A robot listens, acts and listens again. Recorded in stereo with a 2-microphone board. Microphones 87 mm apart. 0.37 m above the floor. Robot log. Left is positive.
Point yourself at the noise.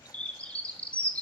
note: The bird: about 15° left or 165° left.
cmd yaw +15
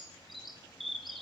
end: Found it: a bird, straight ahead, 1 to 2 m away.